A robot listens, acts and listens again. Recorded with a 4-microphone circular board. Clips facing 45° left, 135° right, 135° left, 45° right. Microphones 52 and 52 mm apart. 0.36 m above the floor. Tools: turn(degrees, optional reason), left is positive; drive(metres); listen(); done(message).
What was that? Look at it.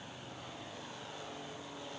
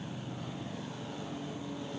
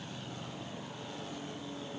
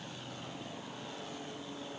listen()
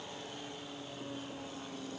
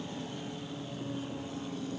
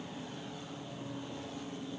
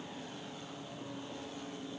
listen()
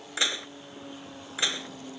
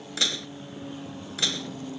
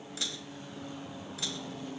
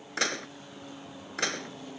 turn(degrees=-25, reason="The dishes clattering: 25° right.")
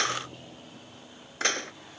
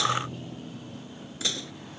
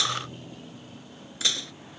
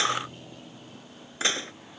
turn(degrees=10, reason="The dishes clattering is now 10° left.")
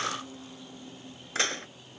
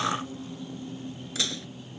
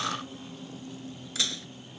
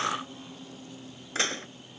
done("Found it: dishes clattering, straight ahead.")